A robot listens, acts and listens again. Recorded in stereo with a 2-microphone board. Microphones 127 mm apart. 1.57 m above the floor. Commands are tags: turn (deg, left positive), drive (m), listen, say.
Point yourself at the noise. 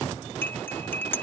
<turn deg="15"/>
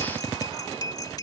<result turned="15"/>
<turn deg="150"/>
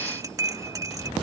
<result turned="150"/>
<turn deg="-30"/>
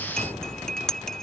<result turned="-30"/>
<say>Found it: cutlery clinking, straight ahead.</say>